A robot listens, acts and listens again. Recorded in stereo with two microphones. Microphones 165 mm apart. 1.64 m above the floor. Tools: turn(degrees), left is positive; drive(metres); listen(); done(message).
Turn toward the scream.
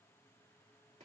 listen()
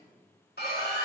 turn(degrees=90)
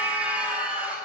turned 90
turn(degrees=-10)
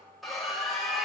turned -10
done("Found it: a scream, straight ahead.")